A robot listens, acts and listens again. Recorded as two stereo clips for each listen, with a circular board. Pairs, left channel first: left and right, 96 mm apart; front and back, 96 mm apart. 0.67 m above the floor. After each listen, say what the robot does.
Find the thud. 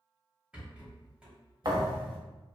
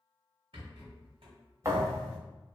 Turn 125° right.
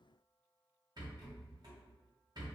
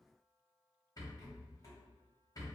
I heard a thud from this way, but can't make it out now.